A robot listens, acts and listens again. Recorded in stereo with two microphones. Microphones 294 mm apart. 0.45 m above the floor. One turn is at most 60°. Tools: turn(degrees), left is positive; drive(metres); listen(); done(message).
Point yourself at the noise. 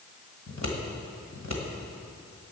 turn(degrees=60)
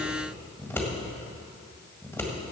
turn(degrees=10)
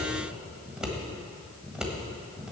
done("Found it: scissors, straight ahead.")